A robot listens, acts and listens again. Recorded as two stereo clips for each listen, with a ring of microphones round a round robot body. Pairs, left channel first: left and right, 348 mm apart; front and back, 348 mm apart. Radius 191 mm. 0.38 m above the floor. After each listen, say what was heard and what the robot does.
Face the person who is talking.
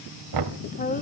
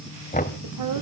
The woman speaking: 155° left. Turn 155° left.
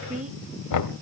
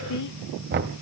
The woman speaking is now 20° right. Turn 20° right.
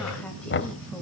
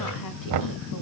Keep listening.
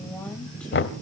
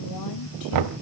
Keep listening.
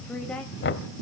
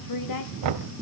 Found it: a woman speaking, straight ahead.